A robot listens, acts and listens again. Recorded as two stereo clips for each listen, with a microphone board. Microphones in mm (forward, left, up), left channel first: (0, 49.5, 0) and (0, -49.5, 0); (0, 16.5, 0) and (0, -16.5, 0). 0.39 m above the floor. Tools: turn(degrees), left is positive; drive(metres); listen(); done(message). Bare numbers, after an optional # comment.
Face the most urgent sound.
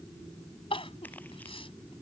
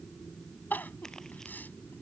# The crying: about 70° left or 110° left.
turn(70)
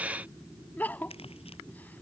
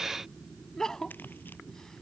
# So it is at 20° left.
turn(20)
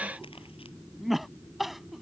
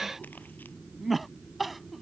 done("Facing the crying.")